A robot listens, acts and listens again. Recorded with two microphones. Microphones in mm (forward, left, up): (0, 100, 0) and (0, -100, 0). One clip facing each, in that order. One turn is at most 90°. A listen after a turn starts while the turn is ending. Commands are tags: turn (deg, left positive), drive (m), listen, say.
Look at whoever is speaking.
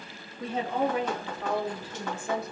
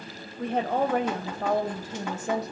<turn deg="-40"/>
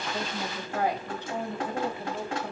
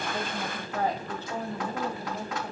<turn deg="25"/>
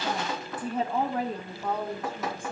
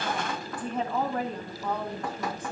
<turn deg="15"/>
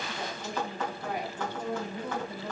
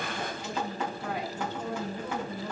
<say>Found it: a woman speaking, straight ahead.</say>